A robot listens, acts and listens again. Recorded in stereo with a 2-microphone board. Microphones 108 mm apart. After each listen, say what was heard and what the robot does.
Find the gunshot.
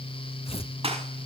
The gunshot: about 65° right or 115° right. Turn 65° right.
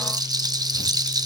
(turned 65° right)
Keep listening.
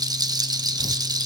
I heard a gunshot, but can't make it out now. It was about straight ahead or 50° right.